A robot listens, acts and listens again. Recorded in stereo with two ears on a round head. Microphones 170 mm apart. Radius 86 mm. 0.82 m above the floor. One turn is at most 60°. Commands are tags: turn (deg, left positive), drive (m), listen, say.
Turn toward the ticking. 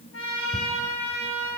<turn deg="-60"/>
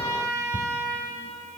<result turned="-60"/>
<turn deg="-35"/>
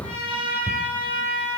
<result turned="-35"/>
<turn deg="-15"/>
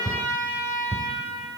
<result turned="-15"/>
<say>Found it: ticking, straight ahead.</say>